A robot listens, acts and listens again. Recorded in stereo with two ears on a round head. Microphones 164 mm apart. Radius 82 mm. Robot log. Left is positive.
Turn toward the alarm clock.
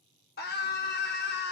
cmd idle
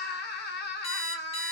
note: The alarm clock: about 35° left or 145° left.
cmd yaw +35
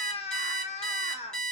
end: Found it: an alarm clock, straight ahead.